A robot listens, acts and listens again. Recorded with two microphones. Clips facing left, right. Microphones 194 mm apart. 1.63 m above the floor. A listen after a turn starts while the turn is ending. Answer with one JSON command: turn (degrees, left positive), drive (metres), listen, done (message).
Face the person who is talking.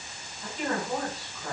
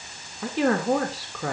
{"turn": -90}
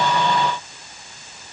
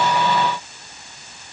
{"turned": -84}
{"listen": true}
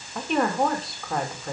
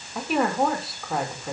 {"done": "Facing the woman speaking, 2 to 4 m away."}